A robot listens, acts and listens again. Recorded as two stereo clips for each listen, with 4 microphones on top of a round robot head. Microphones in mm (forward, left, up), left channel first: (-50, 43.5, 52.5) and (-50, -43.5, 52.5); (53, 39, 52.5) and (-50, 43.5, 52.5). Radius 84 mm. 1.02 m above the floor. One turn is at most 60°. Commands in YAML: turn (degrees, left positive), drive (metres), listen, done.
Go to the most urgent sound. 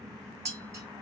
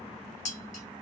listen: true
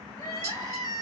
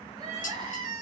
turn: 60
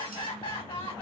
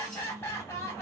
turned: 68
turn: 60
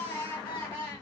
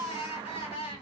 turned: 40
turn: 25
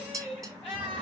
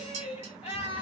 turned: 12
turn: 10
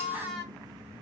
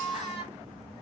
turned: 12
drive: 1.0
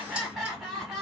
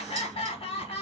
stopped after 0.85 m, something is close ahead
done: "I am next to the crying."